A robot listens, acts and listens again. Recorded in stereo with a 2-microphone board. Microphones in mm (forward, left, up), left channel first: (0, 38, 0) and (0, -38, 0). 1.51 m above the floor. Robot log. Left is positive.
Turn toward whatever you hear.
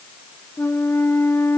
note: The flute: about 30° left or 150° left.
cmd yaw +30
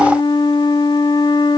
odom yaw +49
note: So it is at 100° left.
cmd yaw +100
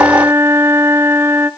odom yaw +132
note: The flute is now 35° right.
cmd yaw -35
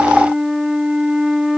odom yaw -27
end: Found it: a flute, straight ahead, under 1 m away.